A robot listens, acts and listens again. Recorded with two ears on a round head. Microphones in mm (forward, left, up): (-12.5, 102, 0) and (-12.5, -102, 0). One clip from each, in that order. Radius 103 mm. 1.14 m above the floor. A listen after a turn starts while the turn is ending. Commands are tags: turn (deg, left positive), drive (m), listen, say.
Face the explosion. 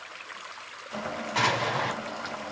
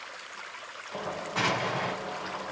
<turn deg="30"/>
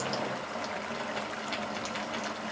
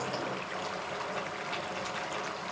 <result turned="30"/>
<listen/>
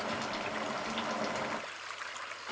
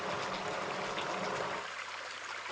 <say>I heard an explosion, but can't make it out now. It was about straight ahead or 120° left.</say>